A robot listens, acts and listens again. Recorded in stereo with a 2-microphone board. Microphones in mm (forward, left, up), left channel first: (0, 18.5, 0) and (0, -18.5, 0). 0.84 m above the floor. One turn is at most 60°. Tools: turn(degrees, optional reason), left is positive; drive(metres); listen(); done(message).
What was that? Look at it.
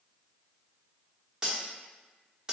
turn(degrees=-20, reason="The cutlery clinking: about 20° right or 160° right.")
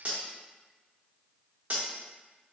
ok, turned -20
turn(degrees=-60, reason="So it is at 140° right.")
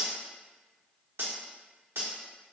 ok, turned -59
turn(degrees=-60, reason="The cutlery clinking is now 80° right.")
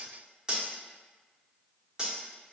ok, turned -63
turn(degrees=-20, reason="The cutlery clinking is now 20° right.")
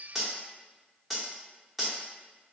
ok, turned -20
done("Found it: cutlery clinking, straight ahead.")